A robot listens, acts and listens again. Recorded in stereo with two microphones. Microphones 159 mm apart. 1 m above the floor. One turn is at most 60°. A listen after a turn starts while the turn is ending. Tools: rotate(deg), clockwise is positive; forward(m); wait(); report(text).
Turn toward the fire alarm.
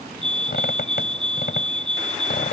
rotate(30)
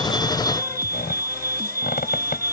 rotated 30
rotate(60)
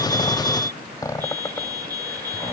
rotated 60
rotate(60)
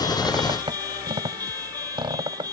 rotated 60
rotate(25)
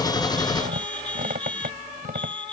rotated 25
report("Facing the fire alarm.")